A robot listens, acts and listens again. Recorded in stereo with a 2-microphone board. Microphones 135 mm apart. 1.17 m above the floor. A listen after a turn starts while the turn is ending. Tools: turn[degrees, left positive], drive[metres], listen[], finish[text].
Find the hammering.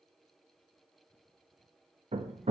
Thought: The hammering: about 55° right or 125° right.
Action: turn[-55]
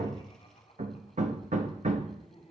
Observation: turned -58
Thought: So it is at 65° right.
Action: turn[-65]
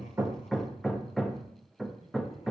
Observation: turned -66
Action: finish[Found it: hammering, straight ahead, under 1 m away.]